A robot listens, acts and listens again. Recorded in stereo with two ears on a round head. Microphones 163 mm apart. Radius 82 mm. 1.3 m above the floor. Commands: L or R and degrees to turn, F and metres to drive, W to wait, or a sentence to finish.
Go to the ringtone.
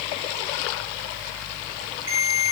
R90
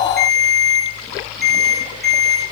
F1.0
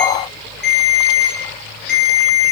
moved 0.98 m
F1.0
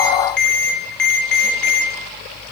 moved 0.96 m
F1.0
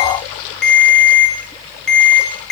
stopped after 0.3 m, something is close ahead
I am next to the ringtone.